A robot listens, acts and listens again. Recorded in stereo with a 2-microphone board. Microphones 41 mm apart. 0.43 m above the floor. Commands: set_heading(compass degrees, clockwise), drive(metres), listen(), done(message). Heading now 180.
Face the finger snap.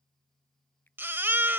set_heading(125)
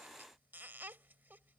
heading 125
listen()
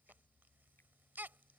listen()
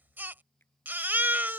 set_heading(55)
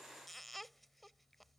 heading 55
listen()
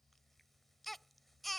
listen()
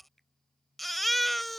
set_heading(45)
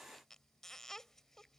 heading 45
listen()
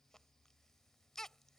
listen()
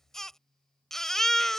done("I heard a finger snap from this way, but can't make it out now.")